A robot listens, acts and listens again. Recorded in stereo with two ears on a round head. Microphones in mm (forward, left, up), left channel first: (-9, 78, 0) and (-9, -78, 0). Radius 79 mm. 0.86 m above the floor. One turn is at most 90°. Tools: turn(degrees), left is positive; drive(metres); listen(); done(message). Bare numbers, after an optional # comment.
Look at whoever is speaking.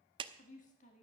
# The woman speaking: about 40° left or 140° left.
turn(40)
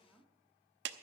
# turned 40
done("Facing the woman speaking, 1 to 2 m away.")